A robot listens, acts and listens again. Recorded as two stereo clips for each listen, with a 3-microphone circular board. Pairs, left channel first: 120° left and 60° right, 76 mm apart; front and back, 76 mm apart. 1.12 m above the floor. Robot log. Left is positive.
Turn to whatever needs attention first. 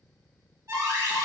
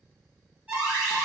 note: The alarm: 105° right.
cmd yaw -105
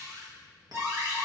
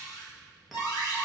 note: The alarm is now 10° right.
cmd yaw -10
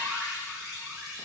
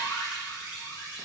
end: Facing the alarm, 1 to 2 m away.